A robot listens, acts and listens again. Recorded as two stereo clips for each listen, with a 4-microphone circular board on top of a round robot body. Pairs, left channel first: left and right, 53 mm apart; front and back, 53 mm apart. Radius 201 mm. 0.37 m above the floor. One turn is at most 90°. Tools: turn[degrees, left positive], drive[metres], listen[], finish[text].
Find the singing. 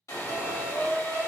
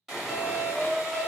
Thought: The singing: 160° right.
Action: turn[-90]
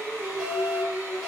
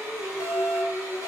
Thought: The singing is now 130° right.
Action: turn[-90]
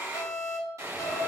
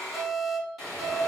Thought: Nothing new. It was at 40° right.
Action: turn[-40]
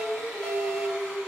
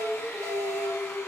Thought: The singing is now 15° right.
Action: turn[-15]
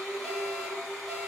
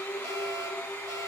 Action: finish[Found it: singing, straight ahead, 1 to 2 m away.]